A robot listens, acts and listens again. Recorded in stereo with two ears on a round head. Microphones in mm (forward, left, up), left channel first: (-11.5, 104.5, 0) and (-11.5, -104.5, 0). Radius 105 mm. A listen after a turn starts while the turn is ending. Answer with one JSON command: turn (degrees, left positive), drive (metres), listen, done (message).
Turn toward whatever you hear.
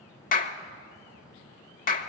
{"turn": 40}
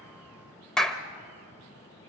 {"done": "Facing the clap, 1 to 2 m away."}